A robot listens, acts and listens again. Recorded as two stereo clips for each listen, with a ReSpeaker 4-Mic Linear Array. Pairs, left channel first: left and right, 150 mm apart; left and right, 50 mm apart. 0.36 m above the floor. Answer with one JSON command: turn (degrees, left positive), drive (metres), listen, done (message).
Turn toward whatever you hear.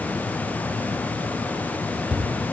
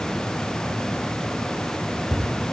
{"turn": -30}
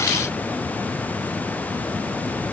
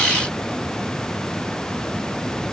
{"listen": true}
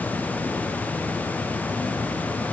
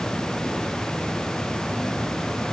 {"done": "I heard a thud, but can't make it out now. It was about 25° left or 145° right."}